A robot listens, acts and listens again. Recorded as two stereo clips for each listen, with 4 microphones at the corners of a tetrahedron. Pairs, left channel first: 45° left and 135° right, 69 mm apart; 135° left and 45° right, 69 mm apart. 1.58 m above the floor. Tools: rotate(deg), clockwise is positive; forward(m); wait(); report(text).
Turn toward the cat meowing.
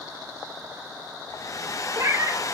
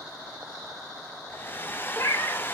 rotate(175)
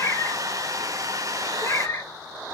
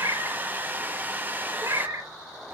report("Facing the cat meowing.")